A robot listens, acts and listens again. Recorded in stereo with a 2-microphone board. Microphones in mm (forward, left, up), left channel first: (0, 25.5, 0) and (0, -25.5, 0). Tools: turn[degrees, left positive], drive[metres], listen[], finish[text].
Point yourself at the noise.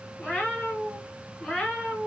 Action: turn[30]
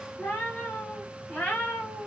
Thought: So it is at 160° left.
Action: turn[160]
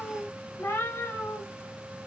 Thought: The cat meowing is now 65° left.
Action: turn[65]
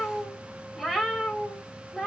Action: finish[Facing the cat meowing, 1 to 2 m away.]